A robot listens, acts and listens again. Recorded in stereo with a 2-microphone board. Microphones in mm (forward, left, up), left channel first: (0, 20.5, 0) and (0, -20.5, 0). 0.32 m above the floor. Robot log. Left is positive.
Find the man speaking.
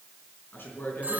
note: The man speaking: about 55° left or 125° left.
cmd yaw +55
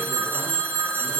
cmd idle
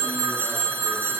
cmd idle
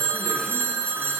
end: I heard a man speaking, but can't make it out now. It was about straight ahead or 70° left.